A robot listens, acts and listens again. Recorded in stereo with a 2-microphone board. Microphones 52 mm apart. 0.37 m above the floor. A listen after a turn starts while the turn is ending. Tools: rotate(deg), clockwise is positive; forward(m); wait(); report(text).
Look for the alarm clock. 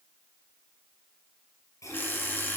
rotate(-40)
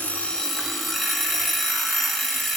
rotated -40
report("Found it: an alarm clock, straight ahead, 2 to 4 m away.")